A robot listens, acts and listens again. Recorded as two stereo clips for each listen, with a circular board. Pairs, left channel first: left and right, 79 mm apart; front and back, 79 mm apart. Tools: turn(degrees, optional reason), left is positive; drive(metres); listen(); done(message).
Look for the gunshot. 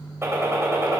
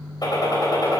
turn(degrees=-35, reason="The gunshot: 35° right.")
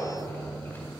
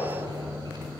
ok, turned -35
done("I heard a gunshot from this way, but can't make it out now.")